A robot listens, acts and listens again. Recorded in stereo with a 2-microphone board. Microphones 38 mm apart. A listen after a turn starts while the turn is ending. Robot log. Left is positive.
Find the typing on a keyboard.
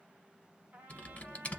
note: The typing on a keyboard: about 35° left or 145° left.
cmd yaw +35
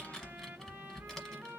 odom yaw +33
note: So it is at 10° left.
cmd yaw +10
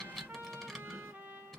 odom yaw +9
end: Facing the typing on a keyboard, under 1 m away.